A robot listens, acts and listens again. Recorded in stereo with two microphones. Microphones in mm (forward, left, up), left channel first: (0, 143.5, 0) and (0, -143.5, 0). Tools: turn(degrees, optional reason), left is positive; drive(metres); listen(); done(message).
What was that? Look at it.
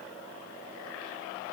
listen()
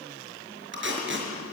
turn(degrees=-40, reason="The tape being pulled: about 40° right or 140° right.")
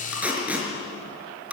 done("Found it: tape being pulled, straight ahead, over 4 m away.")